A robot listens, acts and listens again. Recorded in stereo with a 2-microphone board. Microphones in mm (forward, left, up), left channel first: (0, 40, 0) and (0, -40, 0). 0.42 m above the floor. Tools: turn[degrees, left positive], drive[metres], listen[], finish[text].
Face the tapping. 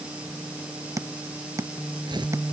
Thought: The tapping: about 40° right or 140° right.
Action: turn[-40]
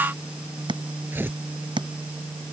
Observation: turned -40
Thought: So it is at 100° right.
Action: turn[-100]
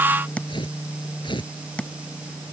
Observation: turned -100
Thought: The tapping is now 15° left.
Action: turn[15]
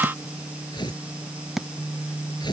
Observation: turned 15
Action: finish[Facing the tapping.]